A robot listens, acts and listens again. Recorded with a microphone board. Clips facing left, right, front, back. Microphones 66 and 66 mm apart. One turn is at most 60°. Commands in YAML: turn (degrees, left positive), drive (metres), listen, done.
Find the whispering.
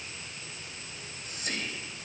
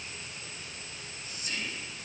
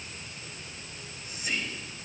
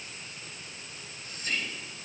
turn: 60
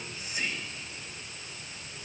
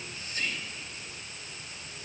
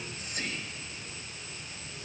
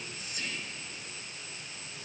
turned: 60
turn: 15
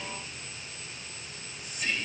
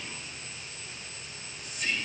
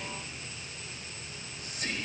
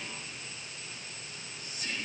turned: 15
done: "Found it: whispering, straight ahead."